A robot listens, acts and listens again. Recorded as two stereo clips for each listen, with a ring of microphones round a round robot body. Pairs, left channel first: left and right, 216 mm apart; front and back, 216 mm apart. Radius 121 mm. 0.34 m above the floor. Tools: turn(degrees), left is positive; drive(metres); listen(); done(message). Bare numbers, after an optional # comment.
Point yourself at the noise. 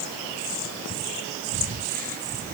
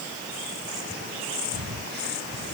# The breathing: 140° right.
turn(-140)
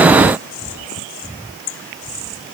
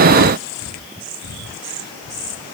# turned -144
done("Facing the breathing.")